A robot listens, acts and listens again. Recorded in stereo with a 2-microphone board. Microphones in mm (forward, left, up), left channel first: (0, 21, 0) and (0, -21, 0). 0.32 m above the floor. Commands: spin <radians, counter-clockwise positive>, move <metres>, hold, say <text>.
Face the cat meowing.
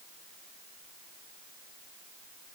hold
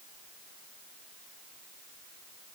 hold
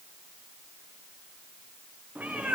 spin -0.70
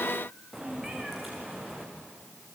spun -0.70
say Facing the cat meowing.